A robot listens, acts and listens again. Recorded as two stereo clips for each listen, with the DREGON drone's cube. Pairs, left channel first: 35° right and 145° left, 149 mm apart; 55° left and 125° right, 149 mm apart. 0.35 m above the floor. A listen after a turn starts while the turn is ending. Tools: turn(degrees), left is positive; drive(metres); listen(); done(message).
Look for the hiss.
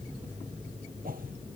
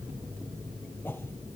listen()
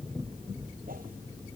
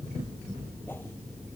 listen()
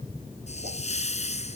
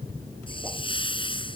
done("Found it: a hiss, straight ahead.")